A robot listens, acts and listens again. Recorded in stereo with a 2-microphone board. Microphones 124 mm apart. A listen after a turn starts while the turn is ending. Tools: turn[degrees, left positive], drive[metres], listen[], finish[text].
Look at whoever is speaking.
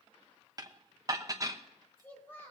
Thought: The child speaking: about 20° left or 160° left.
Action: turn[20]
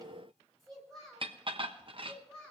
Action: turn[30]
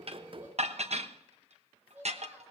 Thought: So it is at 15° right.
Action: turn[-15]
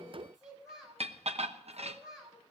Action: finish[Facing the child speaking, over 4 m away.]